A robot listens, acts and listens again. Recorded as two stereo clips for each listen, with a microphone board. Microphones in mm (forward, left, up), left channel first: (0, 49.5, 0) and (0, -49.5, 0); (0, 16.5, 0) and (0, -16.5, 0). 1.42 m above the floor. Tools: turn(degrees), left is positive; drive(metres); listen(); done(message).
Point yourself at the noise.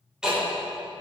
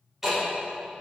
turn(degrees=-30)
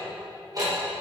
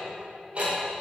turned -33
turn(degrees=-140)
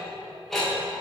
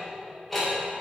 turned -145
done("Found it: ticking, straight ahead.")